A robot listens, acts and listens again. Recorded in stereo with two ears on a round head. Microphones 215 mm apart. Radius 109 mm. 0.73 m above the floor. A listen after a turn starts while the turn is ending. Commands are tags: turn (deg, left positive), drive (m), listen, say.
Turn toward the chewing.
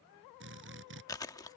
<turn deg="15"/>
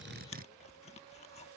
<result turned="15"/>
<turn deg="150"/>
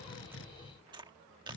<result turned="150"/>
<turn deg="-20"/>
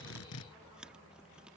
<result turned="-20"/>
<say>Found it: chewing, straight ahead.</say>